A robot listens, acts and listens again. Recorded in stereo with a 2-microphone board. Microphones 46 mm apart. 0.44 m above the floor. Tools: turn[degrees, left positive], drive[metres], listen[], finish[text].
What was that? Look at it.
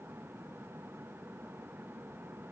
Action: listen[]
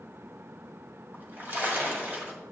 Thought: The splash: about 45° right or 135° right.
Action: turn[-45]
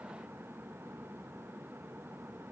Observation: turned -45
Action: listen[]
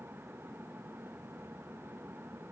Action: finish[I heard a splash, but can't make it out now. It was about straight ahead or 90° right.]